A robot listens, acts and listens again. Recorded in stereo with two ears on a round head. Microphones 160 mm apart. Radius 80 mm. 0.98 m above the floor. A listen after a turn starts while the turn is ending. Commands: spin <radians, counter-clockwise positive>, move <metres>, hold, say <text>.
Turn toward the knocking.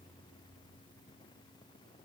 hold
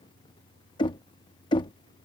spin 0.44
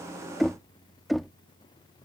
say Facing the knocking.